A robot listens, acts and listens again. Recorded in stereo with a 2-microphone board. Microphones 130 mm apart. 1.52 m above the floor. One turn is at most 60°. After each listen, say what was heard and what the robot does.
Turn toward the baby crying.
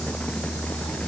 Keep listening.
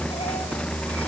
Keep listening.
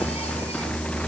I can't make out a baby crying to turn to.